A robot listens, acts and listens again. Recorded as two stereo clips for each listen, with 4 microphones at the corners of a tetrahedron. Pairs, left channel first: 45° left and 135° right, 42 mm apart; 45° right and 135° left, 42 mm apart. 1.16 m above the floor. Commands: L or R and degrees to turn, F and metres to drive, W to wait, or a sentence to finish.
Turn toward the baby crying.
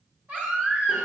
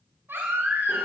L175
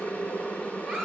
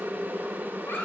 R30
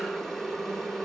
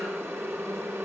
W
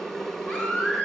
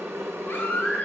Facing the baby crying, 2 to 4 m away.